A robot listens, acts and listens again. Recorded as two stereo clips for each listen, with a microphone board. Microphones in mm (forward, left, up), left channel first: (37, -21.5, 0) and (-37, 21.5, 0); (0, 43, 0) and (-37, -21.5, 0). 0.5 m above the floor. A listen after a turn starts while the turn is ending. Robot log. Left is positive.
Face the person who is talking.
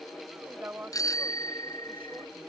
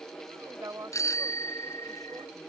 note: The woman speaking: 145° right.
cmd yaw -145
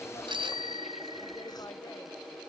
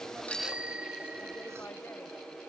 cmd idle
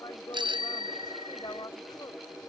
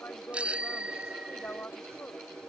end: Found it: a woman speaking, straight ahead.